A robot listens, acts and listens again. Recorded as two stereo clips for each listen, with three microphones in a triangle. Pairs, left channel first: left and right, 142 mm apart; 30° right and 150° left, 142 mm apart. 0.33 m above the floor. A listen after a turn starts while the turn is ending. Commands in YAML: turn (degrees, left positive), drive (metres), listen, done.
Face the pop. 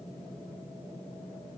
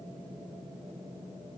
listen: true
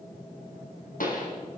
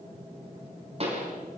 turn: 105
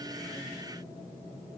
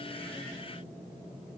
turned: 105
done: "I heard a pop from this way, but can't make it out now."